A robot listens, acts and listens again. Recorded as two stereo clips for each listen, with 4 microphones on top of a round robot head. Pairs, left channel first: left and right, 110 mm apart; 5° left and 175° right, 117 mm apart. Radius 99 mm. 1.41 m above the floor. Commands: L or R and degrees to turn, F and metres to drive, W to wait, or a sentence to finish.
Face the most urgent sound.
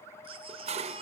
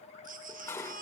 R145
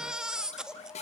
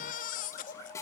Facing the baby crying, 1 to 2 m away.